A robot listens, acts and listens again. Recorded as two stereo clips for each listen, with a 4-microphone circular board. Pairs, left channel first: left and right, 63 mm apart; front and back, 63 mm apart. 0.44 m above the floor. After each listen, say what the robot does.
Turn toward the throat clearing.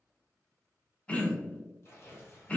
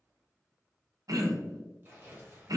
Turn 160° left.
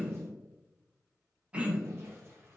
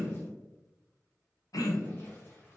Turn 20° right.
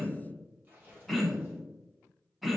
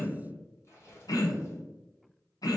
Found it: throat clearing, straight ahead, under 1 m away.